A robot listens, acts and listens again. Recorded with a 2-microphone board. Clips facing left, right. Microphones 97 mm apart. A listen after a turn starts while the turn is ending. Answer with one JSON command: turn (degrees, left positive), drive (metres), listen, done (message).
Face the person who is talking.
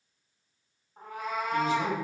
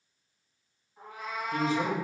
{"turn": -35}
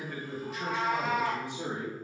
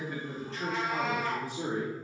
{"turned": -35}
{"turn": 25}
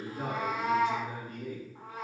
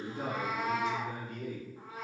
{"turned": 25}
{"turn": 25}
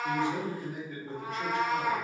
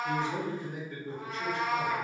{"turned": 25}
{"done": "Facing the man speaking, 2 to 4 m away."}